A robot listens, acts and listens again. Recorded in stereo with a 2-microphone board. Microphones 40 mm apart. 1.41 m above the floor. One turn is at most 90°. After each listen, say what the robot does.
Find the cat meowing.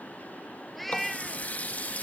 Turn 30° left.
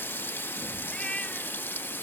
Turn 90° left.
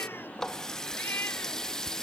Turn 70° left.
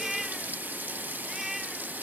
Facing the cat meowing.